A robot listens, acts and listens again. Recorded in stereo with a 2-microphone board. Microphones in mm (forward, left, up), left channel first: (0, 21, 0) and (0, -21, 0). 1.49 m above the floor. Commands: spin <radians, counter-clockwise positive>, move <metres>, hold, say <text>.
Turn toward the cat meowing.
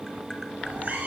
spin -0.87
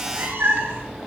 spin -1.22
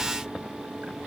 hold
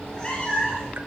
spin 0.44
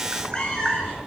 spin 0.44
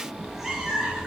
say Facing the cat meowing, over 4 m away.